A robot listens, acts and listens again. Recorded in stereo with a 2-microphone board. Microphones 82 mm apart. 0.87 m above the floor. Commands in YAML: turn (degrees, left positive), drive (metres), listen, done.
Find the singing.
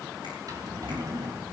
listen: true
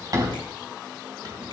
listen: true
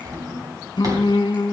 turn: 65
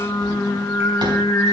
turn: 45
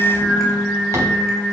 turn: 15
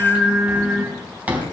done: "Found it: singing, straight ahead, 2 to 4 m away."